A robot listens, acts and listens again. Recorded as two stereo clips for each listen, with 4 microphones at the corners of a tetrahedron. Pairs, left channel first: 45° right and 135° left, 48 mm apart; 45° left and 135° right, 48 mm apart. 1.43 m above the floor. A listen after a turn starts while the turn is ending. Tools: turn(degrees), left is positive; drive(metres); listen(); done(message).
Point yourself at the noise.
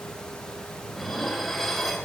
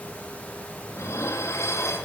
turn(degrees=40)
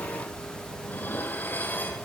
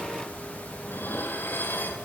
done("Facing the dishes clattering, 1 to 2 m away.")